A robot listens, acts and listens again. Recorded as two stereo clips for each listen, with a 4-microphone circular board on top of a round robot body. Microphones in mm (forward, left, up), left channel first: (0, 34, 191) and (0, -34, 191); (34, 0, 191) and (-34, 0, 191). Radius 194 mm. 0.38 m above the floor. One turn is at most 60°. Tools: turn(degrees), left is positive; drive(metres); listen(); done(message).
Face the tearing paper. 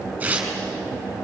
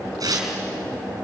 turn(degrees=-60)
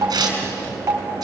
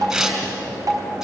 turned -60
turn(degrees=-60)
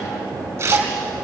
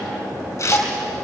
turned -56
turn(degrees=-45)
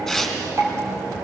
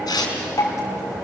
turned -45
done("Found it: tearing paper, straight ahead.")